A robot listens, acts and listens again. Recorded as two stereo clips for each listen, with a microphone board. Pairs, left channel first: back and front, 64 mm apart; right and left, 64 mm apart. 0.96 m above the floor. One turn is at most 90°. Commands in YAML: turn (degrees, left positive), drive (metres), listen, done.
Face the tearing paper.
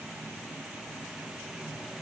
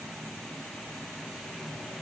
listen: true
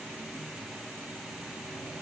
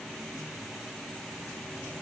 listen: true
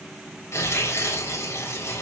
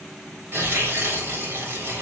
turn: 90
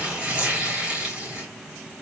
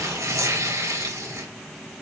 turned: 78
turn: 70
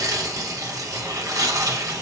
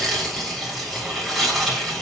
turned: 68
done: "Facing the tearing paper."